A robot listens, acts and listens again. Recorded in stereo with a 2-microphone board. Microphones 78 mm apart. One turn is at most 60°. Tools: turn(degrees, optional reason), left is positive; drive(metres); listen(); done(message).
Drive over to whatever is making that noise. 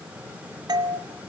turn(degrees=-60, reason="The doorbell: about 60° right or 120° right.")
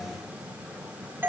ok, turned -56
turn(degrees=-30, reason="So it is at 30° right.")
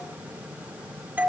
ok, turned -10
turn(degrees=-20, reason="The doorbell is now 20° right.")
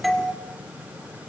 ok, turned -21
drive(metres=1.0)
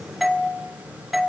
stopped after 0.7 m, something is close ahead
done("Arrived at the doorbell, straight ahead.")